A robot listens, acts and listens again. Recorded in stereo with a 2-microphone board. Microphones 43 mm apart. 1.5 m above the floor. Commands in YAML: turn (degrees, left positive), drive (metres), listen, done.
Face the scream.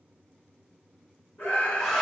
turn: 70
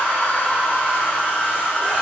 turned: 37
listen: true
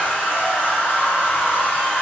listen: true
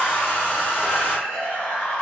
turn: 70
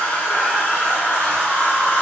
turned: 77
listen: true
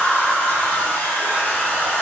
listen: true
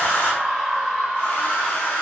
done: "Facing the scream."